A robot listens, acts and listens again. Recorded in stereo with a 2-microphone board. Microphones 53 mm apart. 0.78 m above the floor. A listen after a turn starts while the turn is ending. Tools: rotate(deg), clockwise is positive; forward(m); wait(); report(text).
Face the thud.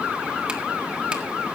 wait()
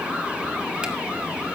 wait()
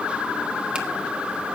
report("I can't make out a thud.")